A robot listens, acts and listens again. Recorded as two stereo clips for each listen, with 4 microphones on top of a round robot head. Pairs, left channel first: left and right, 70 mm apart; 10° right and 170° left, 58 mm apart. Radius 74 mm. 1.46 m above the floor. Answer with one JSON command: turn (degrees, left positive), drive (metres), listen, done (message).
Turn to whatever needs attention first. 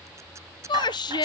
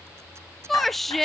{"turn": 75}
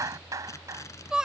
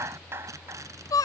{"turn": -10}
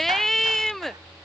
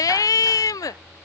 {"done": "Facing the shout."}